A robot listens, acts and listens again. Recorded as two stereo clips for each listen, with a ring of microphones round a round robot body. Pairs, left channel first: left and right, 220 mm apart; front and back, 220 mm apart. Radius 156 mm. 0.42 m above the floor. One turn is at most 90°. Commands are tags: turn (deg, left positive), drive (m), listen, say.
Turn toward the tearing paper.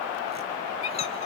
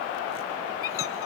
<listen/>
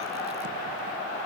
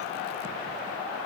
<listen/>
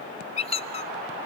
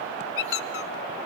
<say>I can't make out tearing paper, only a squeak.</say>